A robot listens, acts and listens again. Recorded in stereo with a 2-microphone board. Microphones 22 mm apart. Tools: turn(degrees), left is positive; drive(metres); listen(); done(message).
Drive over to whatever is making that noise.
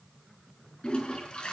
turn(degrees=45)
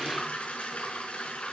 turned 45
turn(degrees=90)
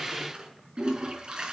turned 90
turn(degrees=-35)
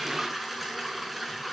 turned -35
drive(metres=1.0)
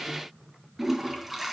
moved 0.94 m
drive(metres=1.0)
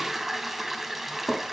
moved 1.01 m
drive(metres=1.0)
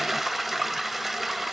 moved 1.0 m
drive(metres=1.0)
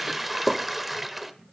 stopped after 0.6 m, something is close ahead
done("I am next to the toilet flushing.")